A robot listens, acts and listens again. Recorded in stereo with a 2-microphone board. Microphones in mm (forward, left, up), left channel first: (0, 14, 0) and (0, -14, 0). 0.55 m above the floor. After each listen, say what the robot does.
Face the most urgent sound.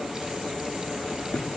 Keep listening.
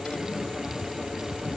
Keep listening.
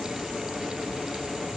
I can't make out anything urgent to turn to.